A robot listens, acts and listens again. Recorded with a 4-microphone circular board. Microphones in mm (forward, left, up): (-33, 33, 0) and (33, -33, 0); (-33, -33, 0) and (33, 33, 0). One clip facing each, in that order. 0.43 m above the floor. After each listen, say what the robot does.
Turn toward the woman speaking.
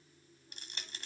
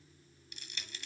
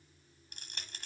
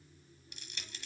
Keep listening.
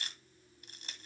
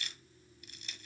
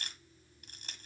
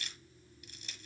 Keep listening.
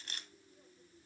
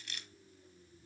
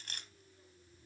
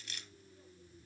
I can't make out a woman speaking, only crushing.